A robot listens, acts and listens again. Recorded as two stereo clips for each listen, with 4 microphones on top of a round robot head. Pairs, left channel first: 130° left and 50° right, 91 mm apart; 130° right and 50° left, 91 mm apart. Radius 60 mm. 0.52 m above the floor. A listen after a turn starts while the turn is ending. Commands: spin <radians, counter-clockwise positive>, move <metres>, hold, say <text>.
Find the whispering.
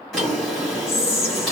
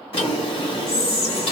spin 3.14
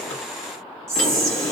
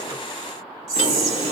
say Found it: whispering, straight ahead, 1 to 2 m away.